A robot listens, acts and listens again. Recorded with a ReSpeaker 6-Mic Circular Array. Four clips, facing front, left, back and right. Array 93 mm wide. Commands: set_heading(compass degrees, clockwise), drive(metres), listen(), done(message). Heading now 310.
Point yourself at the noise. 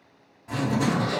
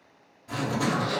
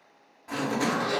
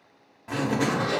set_heading(50)
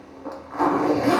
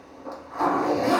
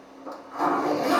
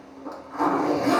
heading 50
done("Facing the zipper, under 1 m away.")